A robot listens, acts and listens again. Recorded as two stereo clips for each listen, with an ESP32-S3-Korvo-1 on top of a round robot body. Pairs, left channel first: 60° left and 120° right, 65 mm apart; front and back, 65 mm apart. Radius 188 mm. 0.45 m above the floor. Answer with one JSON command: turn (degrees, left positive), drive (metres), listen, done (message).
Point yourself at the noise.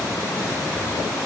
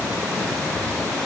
{"listen": true}
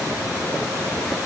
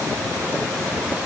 {"listen": true}
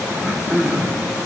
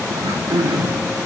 {"turn": 170}
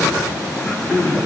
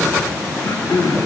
{"done": "Found it: throat clearing, straight ahead."}